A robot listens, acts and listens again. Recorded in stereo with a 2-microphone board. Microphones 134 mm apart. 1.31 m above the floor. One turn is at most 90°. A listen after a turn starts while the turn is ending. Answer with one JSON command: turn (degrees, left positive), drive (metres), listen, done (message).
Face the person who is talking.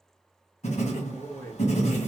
{"turn": 30}
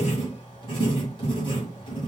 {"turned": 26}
{"listen": true}
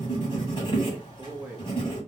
{"turn": -15}
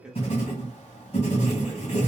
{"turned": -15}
{"listen": true}
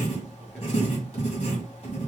{"listen": true}
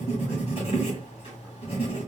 {"done": "Facing where the man speaking came from. I can't hear it now."}